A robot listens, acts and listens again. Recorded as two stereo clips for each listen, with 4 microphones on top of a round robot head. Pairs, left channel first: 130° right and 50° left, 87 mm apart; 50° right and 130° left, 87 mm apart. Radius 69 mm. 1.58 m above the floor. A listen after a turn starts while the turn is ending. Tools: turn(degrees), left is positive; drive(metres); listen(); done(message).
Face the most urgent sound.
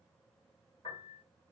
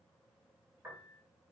listen()
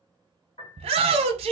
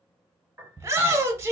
turn(degrees=65)
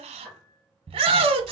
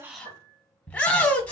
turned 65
turn(degrees=25)
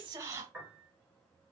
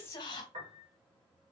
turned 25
listen()
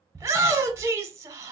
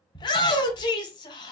turn(degrees=-10)
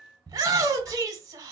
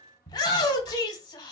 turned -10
done("Facing the shout, under 1 m away.")